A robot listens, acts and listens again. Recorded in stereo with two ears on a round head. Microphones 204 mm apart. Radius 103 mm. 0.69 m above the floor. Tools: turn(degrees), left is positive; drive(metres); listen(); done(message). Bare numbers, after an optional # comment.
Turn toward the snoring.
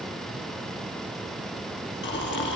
# The snoring: about 55° left or 125° left.
turn(55)
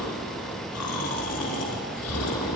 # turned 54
# So it is at 70° left.
turn(70)
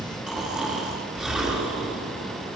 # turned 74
done("Facing the snoring.")